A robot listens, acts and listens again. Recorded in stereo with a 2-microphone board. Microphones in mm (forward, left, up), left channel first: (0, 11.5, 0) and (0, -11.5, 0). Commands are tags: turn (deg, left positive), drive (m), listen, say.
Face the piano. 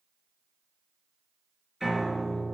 <turn deg="-20"/>
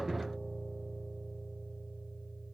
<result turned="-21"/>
<say>Facing the piano.</say>